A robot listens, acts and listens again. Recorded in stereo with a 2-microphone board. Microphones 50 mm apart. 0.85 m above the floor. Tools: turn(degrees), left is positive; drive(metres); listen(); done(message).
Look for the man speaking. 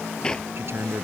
turn(degrees=-55)
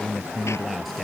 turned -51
done("Facing the man speaking.")